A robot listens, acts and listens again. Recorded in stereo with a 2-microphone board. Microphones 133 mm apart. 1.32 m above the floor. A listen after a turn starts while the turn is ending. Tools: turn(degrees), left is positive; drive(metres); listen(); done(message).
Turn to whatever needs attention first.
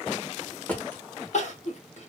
turn(degrees=60)
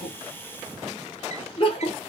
turn(degrees=45)
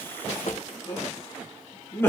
turn(degrees=20)
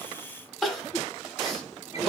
done("Facing the crying.")